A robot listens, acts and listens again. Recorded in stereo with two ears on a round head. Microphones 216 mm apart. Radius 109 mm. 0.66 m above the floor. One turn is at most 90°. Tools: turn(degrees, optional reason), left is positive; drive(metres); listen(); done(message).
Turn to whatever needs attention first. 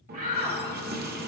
turn(degrees=-30, reason="The shout: about 30° right or 150° right.")
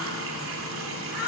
turn(degrees=-10, reason="So it is at 10° right.")
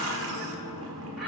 listen()
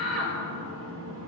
done("Facing the shout.")